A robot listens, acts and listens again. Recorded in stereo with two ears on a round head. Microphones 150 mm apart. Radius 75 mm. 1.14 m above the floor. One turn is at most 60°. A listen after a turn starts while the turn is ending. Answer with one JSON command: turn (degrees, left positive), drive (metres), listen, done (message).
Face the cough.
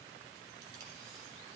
{"listen": true}
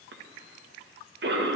{"turn": -60}
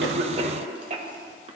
{"turn": -40}
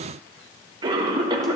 {"turn": -30}
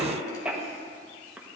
{"turn": -10}
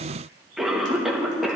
{"done": "Found it: a cough, straight ahead."}